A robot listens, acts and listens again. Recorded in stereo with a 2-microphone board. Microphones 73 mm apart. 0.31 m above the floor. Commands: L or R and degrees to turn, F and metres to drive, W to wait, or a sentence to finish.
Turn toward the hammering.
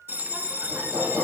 R45
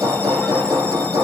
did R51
R80
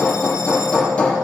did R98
L20
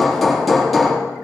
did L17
Facing the hammering.